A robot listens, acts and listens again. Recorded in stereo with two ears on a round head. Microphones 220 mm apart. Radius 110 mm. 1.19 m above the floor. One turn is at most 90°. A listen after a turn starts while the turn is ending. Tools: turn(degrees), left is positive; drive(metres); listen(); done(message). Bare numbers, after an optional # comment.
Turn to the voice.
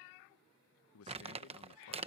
# The man speaking: about 65° left or 115° left.
turn(65)
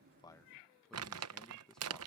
done("Facing the man speaking.")